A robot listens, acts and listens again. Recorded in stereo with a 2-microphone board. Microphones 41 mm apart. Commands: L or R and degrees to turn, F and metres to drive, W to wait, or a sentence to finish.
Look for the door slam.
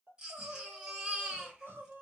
W
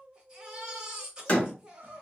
L30
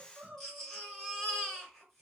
W
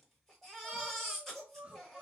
I heard a door slam, but can't make it out now. It was about straight ahead or 120° left.